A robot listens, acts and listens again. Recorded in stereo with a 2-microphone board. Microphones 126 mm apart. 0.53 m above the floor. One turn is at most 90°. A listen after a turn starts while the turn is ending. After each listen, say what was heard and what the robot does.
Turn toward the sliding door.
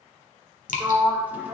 Turn 30° right.
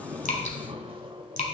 Keep listening.
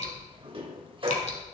So it is at 140° right. Turn 90° right.
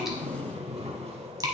The sliding door is now 50° right. Turn 50° right.
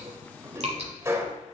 The sliding door is now 20° right. Turn 20° right.
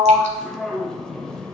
Found it: a sliding door, straight ahead, under 1 m away.